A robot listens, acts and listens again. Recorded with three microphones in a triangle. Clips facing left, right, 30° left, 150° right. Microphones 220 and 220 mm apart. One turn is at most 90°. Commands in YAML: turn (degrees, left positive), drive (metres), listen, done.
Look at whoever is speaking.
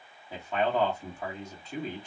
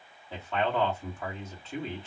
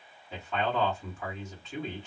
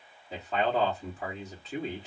turn: 90
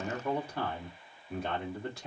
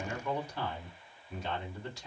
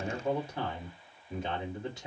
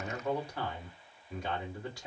turn: 90
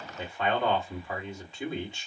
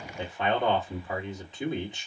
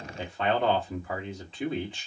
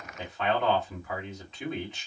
turn: -25
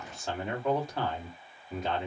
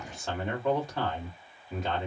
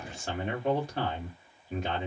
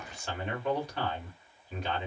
done: "Found it: a man speaking, straight ahead."